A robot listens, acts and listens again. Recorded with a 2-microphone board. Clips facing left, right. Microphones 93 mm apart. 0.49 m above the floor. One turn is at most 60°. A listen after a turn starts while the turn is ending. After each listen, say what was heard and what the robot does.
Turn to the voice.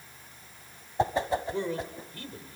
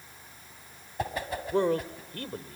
The man speaking: about 55° right or 125° right. Turn 55° right.
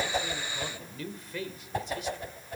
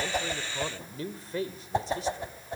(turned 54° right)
So it is at 40° right. Turn 40° right.
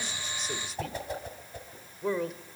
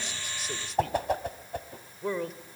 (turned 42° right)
Found it: a man speaking, straight ahead, 1 to 2 m away.